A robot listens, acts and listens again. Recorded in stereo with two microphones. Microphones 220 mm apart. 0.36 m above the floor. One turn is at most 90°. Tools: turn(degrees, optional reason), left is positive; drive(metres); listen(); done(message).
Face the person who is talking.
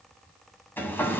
listen()
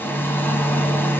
listen()
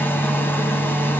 done("I can't make out anyone speaking, only a hair dryer.")